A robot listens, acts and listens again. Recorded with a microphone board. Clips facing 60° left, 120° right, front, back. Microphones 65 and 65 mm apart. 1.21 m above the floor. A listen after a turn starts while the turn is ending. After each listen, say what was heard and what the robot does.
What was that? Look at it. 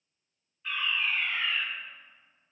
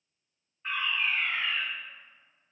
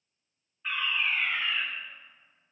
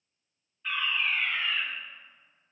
The fire alarm: 70° right. Turn 70° right.
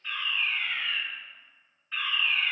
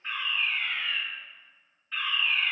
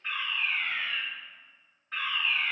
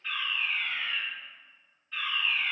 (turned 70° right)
The fire alarm is now 25° right. Turn 25° right.
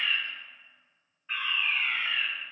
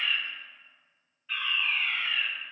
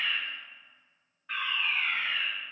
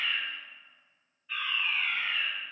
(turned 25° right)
Found it: a fire alarm, straight ahead.